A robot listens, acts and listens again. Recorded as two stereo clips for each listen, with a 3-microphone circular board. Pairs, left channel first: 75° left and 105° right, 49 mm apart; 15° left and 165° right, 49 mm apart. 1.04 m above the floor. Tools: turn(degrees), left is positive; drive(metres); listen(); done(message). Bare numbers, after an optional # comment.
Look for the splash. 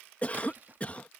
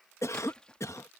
# The splash: 55° right.
turn(-55)
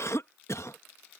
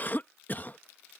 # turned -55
done("I heard a splash from this way, but can't make it out now.")